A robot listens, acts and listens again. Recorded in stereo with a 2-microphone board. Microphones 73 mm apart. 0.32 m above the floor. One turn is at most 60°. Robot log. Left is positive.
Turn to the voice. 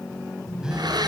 cmd idle
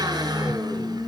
cmd idle
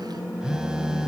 end: I can't make out anyone speaking, only a phone buzzing.